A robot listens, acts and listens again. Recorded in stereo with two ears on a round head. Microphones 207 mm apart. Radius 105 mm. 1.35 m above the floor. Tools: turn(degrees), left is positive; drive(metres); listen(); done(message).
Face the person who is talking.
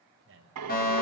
turn(degrees=-55)
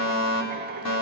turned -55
listen()
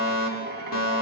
listen()
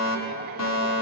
done("I heard a man speaking, but can't make it out now. It was about straight ahead or 70° right.")